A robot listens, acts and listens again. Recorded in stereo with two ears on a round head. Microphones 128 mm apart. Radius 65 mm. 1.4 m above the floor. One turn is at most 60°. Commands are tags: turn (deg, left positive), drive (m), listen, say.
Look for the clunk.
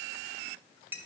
<listen/>
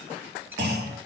<turn deg="-60"/>
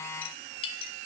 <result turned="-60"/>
<listen/>
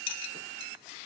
<say>I heard a clunk, but can't make it out now. It was about 15° right or 45° right.</say>